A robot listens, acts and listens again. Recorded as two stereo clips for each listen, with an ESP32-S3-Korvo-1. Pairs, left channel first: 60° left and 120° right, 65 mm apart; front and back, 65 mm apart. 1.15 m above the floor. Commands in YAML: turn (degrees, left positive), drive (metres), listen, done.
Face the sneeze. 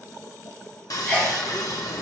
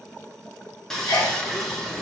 done: "Found it: a sneeze, straight ahead, 2 to 4 m away."